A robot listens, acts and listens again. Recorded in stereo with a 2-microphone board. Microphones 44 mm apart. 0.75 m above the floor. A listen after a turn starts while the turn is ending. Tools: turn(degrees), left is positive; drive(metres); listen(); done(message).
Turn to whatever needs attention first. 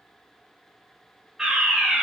turn(degrees=-30)
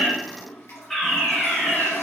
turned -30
turn(degrees=10)
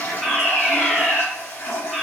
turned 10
done("Found it: a fire alarm, straight ahead.")